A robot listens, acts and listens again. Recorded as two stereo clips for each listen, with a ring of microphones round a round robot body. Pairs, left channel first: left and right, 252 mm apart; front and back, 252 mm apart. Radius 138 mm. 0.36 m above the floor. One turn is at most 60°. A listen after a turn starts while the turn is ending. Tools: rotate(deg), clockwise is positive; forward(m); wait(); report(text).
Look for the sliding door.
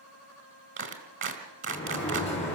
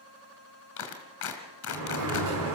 rotate(-60)
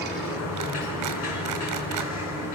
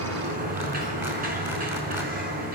rotate(-60)
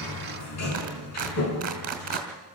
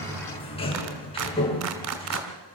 rotate(-60)
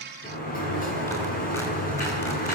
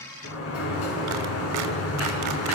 rotate(-30)
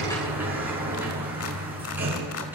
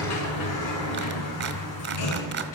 report("Facing the sliding door.")